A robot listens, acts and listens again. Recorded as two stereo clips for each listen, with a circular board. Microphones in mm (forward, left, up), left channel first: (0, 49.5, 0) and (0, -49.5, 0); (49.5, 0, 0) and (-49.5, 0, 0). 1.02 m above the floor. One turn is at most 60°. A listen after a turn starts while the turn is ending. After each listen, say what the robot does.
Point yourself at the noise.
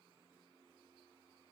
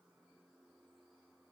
Keep listening.
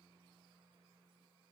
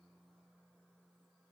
Keep listening.
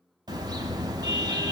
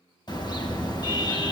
Turn 45° right.
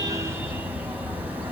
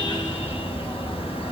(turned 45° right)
Turn 15° right.
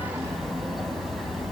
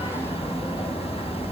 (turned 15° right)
Facing the car horn, 2 to 4 m away.